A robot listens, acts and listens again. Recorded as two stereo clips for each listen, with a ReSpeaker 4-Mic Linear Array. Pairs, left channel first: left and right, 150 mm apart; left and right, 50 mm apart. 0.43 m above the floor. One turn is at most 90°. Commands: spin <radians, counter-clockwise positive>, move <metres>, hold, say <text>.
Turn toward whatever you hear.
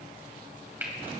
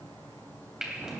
spin -0.52
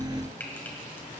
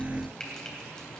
spin 0.26
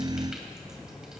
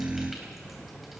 hold
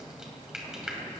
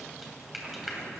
say Facing the frying, 2 to 4 m away.